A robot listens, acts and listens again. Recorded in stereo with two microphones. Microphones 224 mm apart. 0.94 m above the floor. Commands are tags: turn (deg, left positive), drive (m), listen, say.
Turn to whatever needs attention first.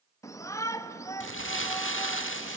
<turn deg="30"/>
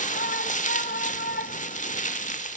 <turn deg="135"/>
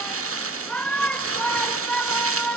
<say>Facing the shout.</say>